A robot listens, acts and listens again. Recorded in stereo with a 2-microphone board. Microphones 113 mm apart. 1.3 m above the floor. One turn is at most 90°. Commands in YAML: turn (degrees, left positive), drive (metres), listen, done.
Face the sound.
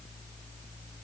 listen: true
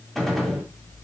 turn: 30
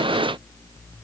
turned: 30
listen: true
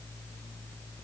done: "I heard a gunshot, but can't make it out now. It was about 25° right or 145° left."